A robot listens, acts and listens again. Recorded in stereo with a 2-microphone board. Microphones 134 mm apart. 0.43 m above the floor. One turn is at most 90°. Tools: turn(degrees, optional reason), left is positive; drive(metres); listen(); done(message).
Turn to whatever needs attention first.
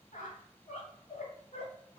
listen()
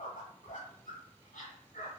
listen()
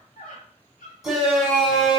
turn(degrees=30)
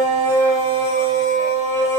turn(degrees=90, reason="So it is at 155° left.")
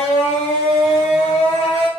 turn(degrees=65, reason="The shout is now 65° left.")
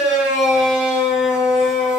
turn(degrees=-10, reason="The shout is now 10° right.")
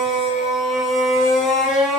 done("Found it: a shout, straight ahead.")